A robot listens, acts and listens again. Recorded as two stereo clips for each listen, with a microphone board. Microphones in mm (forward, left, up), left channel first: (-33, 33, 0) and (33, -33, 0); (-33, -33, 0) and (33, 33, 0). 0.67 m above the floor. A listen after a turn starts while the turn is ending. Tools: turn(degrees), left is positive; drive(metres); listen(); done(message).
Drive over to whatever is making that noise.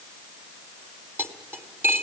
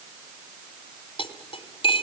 turn(degrees=-115)
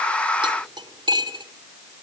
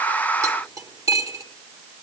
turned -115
turn(degrees=-10)
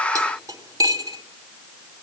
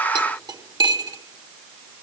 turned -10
drive(metres=1.0)
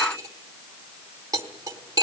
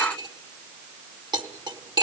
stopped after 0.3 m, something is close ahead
done("Something is in my way. I am facing the cutlery clinking but have not reached it.")